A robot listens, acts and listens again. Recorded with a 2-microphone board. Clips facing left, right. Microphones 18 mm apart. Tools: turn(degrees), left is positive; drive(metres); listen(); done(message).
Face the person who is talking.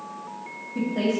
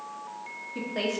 turn(degrees=-40)
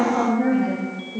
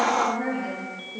done("Found it: a woman speaking, straight ahead.")